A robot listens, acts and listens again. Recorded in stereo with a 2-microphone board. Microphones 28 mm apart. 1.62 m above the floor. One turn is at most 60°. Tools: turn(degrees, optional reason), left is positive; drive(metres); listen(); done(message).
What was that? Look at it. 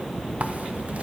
listen()
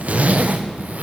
turn(degrees=-55, reason="The zipper: about 55° right or 125° right.")
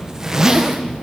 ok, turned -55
turn(degrees=-20, reason="So it is at 20° right.")
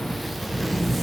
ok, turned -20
done("Found it: a zipper, straight ahead, under 1 m away.")